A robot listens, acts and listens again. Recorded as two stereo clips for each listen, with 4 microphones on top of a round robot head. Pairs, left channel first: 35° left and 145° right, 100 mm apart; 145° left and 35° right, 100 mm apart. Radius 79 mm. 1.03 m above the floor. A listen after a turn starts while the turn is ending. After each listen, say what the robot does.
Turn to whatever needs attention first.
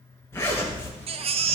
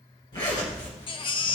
Turn 175° right.
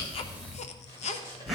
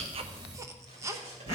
Turn 30° left.
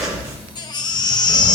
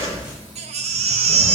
Turn 15° right.
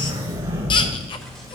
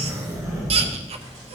Keep listening.
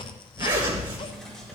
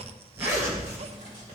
Keep listening.
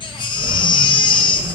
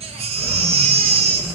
Turn 10° right.
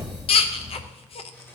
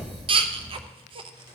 Facing the baby crying, under 1 m away.